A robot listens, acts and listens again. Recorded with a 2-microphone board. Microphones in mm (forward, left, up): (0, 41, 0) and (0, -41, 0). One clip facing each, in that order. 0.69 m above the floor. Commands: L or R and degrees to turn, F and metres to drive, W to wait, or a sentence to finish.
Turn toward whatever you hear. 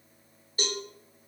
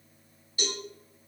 L40
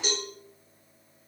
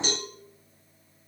Found it: a cowbell, straight ahead, 1 to 2 m away.